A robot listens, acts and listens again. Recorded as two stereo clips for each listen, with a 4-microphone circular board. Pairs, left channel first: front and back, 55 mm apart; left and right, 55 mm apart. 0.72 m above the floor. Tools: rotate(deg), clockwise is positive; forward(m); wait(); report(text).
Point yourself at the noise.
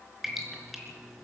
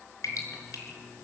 rotate(-95)
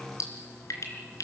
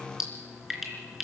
report("Found it: dripping, straight ahead, 2 to 4 m away.")